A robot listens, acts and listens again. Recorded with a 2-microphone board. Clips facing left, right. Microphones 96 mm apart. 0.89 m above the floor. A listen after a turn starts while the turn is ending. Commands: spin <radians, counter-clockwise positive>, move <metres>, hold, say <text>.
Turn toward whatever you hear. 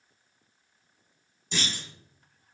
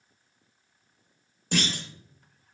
spin -1.05
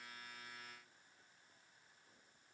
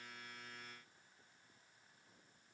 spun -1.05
hold
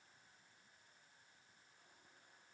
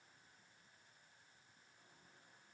say I heard a clunk, but can't make it out now. It was about straight ahead or 60° right.